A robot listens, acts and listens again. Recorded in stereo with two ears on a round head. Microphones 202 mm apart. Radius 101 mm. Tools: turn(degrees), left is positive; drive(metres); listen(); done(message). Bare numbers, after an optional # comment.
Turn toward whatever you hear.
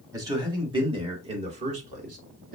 # The man speaking: about 40° right or 140° right.
turn(-40)
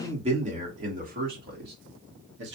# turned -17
# The man speaking: about 50° right or 130° right.
turn(-50)
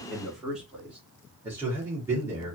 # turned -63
# So it is at 10° right.
turn(-10)
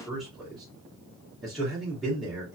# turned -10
done("Found it: a man speaking, straight ahead, 2 to 4 m away.")